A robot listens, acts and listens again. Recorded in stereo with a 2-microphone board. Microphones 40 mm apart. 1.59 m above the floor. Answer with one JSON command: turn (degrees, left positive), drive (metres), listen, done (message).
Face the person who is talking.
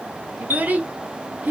{"turn": -45}
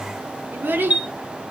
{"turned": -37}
{"turn": -90}
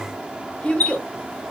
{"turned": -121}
{"turn": 30}
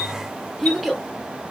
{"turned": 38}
{"done": "Facing the child speaking."}